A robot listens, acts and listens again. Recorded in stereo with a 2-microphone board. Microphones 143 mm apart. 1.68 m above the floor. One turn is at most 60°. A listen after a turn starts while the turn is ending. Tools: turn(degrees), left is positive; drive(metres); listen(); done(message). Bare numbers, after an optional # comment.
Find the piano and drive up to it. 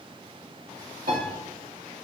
# The piano: about 70° right or 110° right.
turn(-60)
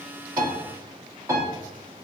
# So it is at 20° right.
turn(-20)
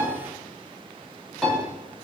drive(1.0)
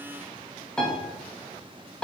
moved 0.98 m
drive(1.0)
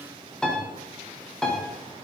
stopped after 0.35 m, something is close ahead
done("Arrived at the piano, straight ahead.")